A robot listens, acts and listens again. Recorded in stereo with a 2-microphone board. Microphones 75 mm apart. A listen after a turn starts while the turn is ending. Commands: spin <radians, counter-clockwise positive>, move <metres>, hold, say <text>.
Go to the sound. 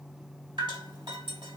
spin -1.57
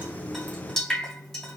spin 0.17
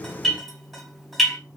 move 1.0
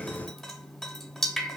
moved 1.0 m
move 1.0
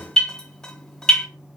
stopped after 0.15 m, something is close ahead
spin 0.17
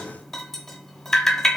say Arrived at the dripping, straight ahead.